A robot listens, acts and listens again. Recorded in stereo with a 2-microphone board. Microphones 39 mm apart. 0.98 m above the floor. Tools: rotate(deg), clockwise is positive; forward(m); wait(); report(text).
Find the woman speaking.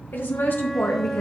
rotate(-60)
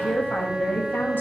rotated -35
rotate(-65)
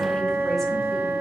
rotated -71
wait()
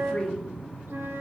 rotate(-10)
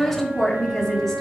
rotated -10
report("Found it: a woman speaking, straight ahead.")